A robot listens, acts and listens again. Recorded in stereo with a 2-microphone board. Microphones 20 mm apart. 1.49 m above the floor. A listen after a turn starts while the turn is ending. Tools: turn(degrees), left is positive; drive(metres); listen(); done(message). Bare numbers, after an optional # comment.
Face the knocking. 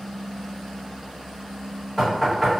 turn(30)
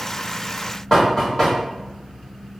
# So it is at 150° left.
turn(150)
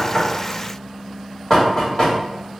# The knocking is now 25° left.
turn(25)
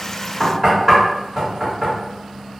# The knocking is now 10° right.
turn(-10)
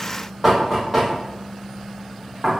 done("Found it: knocking, straight ahead, 1 to 2 m away.")